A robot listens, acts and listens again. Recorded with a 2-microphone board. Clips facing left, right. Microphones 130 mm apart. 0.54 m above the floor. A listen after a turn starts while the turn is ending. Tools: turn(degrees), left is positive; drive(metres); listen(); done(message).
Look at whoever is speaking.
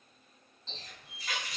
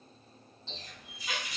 listen()
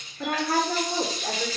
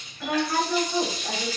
turn(degrees=50)
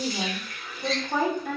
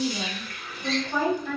turn(degrees=65)
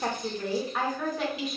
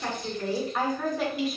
done("Found it: a woman speaking, straight ahead.")